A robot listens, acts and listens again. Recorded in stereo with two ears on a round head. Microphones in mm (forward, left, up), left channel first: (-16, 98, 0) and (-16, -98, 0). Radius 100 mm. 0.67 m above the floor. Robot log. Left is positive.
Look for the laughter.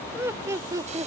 note: The laughter: about 20° right or 160° right.
cmd yaw -20
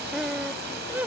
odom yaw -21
cmd yaw -30
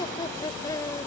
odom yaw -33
note: So it is at 15° left.
cmd yaw +15
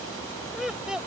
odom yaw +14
end: Found it: laughter, straight ahead.